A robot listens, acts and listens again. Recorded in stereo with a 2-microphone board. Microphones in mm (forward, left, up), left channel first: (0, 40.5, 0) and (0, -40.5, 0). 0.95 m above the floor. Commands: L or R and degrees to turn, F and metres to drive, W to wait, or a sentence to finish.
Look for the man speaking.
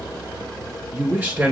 R15
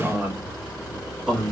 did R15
R30
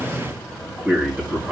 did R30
R30
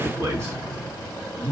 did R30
R150
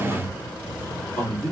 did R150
L15
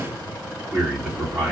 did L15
Facing the man speaking, 2 to 4 m away.